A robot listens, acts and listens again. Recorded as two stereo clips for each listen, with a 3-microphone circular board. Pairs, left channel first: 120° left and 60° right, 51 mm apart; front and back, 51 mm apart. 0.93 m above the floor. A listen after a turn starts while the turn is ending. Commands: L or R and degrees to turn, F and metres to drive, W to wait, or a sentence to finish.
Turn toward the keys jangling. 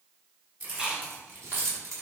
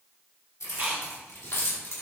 R35
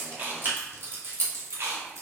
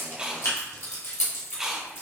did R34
R35
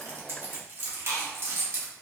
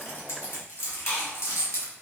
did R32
R30
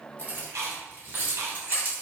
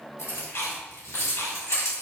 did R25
R15
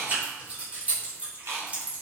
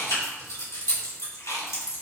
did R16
Facing the keys jangling, 2 to 4 m away.